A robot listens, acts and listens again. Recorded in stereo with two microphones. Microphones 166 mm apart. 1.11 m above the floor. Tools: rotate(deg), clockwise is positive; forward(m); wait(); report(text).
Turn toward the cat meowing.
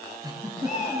rotate(-50)
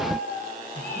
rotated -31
rotate(-105)
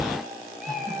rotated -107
report("Found it: a cat meowing, straight ahead.")